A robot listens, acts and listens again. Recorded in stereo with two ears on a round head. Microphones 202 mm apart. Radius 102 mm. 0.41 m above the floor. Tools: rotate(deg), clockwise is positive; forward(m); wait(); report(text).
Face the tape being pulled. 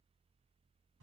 wait()
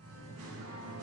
wait()
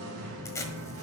rotate(-30)
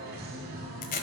rotate(-135)
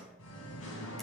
wait()
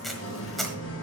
report("Found it: tape being pulled, straight ahead, 1 to 2 m away.")